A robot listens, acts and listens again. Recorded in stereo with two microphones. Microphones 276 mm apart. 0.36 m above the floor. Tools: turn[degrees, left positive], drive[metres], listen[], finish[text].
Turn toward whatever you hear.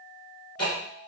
Thought: The ticking: about 60° left or 120° left.
Action: turn[60]
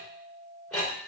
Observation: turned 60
Action: finish[Found it: ticking, straight ahead.]